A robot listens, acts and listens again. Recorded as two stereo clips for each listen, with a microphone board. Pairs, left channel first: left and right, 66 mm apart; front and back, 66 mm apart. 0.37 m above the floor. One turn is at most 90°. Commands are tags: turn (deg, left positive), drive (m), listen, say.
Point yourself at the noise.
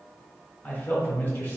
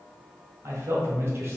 <turn deg="90"/>
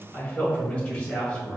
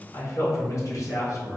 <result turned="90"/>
<turn deg="15"/>
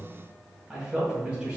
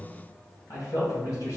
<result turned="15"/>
<turn deg="-20"/>
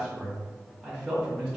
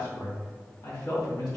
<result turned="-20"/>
<turn deg="-10"/>
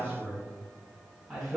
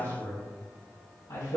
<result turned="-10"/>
<say>Facing the man speaking.</say>